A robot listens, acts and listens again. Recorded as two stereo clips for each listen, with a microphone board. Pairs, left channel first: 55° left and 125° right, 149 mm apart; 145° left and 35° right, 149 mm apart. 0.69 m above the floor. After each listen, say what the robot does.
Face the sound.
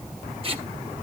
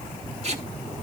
Turn 75° right.
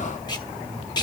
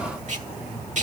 Found it: tape being pulled, straight ahead.